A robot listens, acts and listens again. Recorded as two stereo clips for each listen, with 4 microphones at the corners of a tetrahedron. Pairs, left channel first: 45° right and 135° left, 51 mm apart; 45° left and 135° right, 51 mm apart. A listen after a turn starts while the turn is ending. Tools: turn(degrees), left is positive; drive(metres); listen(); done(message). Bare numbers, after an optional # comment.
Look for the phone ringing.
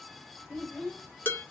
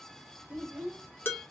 listen()
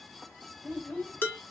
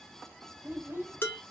listen()
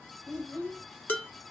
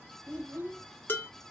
done("I can't make out a phone ringing, only a child speaking and dishes clattering.")